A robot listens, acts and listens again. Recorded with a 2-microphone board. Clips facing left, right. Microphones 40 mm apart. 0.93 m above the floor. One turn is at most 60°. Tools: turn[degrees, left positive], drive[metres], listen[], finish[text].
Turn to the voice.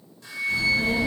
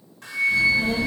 Thought: The child speaking: about 65° left or 115° left.
Action: turn[60]
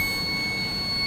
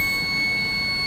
Thought: So it is at 35° left.
Action: turn[35]
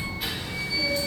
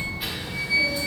Thought: The child speaking is now 10° right.
Action: turn[-10]
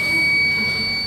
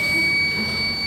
Action: finish[Facing the child speaking.]